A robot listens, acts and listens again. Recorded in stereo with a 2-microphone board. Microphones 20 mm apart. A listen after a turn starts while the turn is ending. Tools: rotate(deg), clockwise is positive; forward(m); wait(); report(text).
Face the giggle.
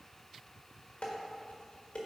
wait()
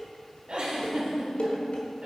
rotate(70)
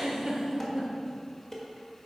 rotate(20)
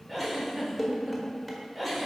report("Facing the giggle.")